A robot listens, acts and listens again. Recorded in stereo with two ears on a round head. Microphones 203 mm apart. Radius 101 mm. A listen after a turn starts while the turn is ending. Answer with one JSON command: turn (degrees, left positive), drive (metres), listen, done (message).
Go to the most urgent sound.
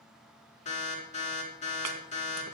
{"turn": 30}
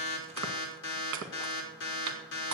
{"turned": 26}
{"turn": 120}
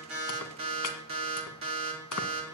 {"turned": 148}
{"turn": -25}
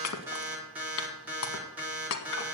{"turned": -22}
{"drive": 1.0}
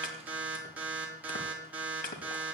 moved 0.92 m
{"drive": 1.0}
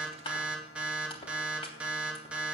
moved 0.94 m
{"drive": 1.0}
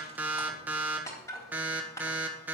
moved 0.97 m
{"turn": -10}
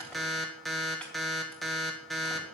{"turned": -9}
{"drive": 1.0}
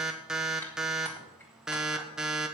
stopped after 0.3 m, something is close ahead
{"done": "Arrived at the alarm, straight ahead."}